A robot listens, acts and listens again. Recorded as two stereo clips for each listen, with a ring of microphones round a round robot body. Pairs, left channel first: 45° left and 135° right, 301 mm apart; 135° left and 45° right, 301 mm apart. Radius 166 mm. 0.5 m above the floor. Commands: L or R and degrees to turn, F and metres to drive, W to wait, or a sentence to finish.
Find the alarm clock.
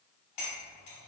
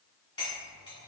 W
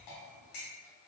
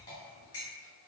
W
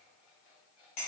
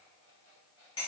L25
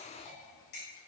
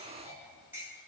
W
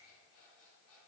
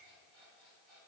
Facing the alarm clock.